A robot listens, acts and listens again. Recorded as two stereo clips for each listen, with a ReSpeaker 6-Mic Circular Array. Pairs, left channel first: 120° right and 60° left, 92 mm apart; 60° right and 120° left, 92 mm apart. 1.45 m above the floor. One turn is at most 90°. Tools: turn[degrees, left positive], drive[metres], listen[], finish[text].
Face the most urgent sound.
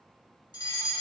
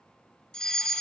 Thought: The fire alarm: 140° right.
Action: turn[-90]
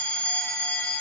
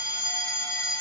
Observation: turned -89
Thought: The fire alarm is now 50° right.
Action: turn[-50]
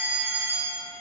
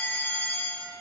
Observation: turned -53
Action: finish[Found it: a fire alarm, straight ahead.]